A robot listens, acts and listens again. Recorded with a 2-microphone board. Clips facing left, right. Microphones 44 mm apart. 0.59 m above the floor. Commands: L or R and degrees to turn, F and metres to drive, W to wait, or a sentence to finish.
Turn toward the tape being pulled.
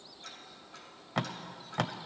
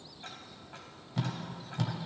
L90
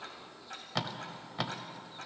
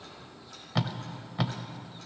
Found it: tape being pulled, straight ahead, under 1 m away.